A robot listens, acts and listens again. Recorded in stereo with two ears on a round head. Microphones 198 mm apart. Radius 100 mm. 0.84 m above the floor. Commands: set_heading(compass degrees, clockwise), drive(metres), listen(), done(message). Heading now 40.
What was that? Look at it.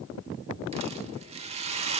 set_heading(70)
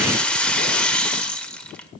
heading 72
done("Facing the rattle, 1 to 2 m away.")